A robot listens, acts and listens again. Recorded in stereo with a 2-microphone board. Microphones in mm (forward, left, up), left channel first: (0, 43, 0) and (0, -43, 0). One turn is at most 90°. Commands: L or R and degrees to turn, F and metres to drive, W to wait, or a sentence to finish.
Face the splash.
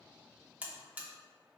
W
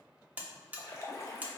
L35
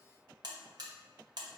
W
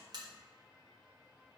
I heard a splash, but can't make it out now. It was about straight ahead or 110° left.